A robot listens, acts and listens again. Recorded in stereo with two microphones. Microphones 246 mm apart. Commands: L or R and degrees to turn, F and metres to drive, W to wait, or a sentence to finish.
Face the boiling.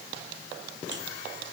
W
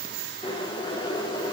L20
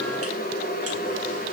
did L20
L140
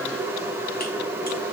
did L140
R10
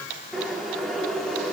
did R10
Found it: boiling, straight ahead, over 4 m away.